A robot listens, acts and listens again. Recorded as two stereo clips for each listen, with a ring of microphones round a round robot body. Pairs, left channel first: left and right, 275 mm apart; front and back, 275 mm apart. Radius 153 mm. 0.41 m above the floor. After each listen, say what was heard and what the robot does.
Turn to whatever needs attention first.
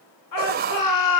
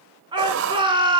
The shout: 105° left. Turn 105° left.
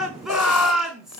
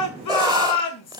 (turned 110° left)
Facing the shout.